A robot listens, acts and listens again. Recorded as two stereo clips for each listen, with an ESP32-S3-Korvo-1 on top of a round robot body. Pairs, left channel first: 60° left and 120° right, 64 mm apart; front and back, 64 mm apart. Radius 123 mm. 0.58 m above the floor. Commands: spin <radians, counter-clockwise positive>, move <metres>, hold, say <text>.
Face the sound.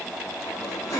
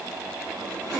spin 1.83
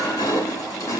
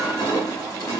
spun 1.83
spin 0.52
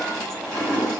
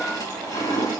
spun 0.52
spin -0.26
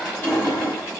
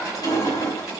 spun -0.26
say Found it: crushing, straight ahead, over 4 m away.